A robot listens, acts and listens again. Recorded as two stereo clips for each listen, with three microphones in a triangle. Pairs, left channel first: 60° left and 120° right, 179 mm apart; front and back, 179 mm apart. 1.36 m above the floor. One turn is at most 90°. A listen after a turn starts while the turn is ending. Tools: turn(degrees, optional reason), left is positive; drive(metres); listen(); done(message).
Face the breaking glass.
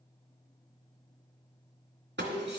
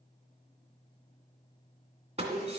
turn(degrees=-90, reason="The breaking glass: 130° right.")
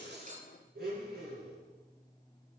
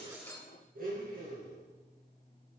turn(degrees=-40, reason="Nothing new. It was at 40° right.")
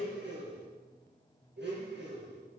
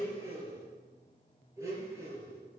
done("Facing where the breaking glass came from. I can't hear it now.")